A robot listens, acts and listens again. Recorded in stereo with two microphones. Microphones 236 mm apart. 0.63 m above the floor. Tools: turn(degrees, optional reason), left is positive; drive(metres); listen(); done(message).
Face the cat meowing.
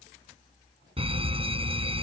listen()
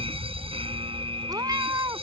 turn(degrees=-15, reason="The cat meowing: about 15° right or 165° right.")
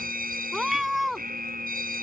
done("Facing the cat meowing.")